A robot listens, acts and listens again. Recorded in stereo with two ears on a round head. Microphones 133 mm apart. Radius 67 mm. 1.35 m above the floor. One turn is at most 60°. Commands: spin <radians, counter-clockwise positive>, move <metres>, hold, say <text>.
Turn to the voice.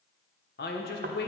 spin 1.05
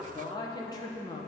spin 0.52
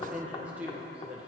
spin -0.17
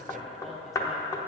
hold
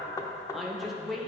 say Found it: a woman speaking, straight ahead.